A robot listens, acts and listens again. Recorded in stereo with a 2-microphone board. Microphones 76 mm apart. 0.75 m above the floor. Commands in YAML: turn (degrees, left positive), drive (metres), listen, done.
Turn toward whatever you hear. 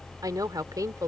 turn: -50
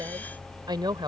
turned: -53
turn: -75
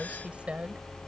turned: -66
turn: -15
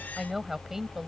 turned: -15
done: "Found it: a woman speaking, straight ahead."